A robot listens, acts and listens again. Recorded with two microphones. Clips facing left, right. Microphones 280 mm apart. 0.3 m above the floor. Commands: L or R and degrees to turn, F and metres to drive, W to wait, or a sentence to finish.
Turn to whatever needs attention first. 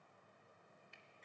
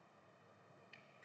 W
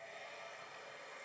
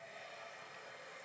W
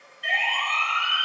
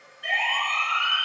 R65
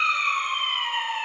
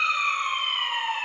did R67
Facing the siren.